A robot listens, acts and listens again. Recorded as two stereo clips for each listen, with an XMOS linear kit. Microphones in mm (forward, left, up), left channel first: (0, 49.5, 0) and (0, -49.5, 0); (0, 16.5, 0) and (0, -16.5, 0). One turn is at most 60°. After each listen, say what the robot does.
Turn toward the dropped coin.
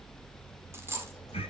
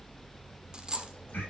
Turn 25° right.
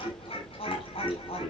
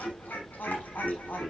Keep listening.
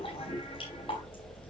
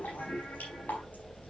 I heard a dropped coin, but can't make it out now. It was about straight ahead or 130° right.